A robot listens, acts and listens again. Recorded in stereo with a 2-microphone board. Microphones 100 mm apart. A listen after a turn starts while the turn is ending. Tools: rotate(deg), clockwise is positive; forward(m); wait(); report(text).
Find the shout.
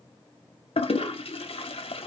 wait()
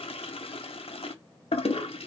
wait()
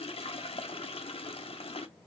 report("I can't make out a shout to turn to.")